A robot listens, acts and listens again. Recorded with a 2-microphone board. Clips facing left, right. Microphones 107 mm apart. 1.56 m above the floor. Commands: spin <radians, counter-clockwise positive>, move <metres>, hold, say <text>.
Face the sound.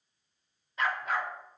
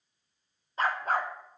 spin -0.70
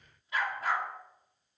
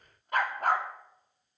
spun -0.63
spin -0.87
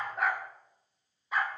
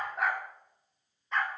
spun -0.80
spin 0.17
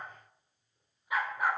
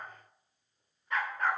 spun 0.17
spin 0.17
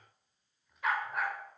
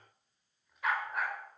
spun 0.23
say Facing the dog barking, 2 to 4 m away.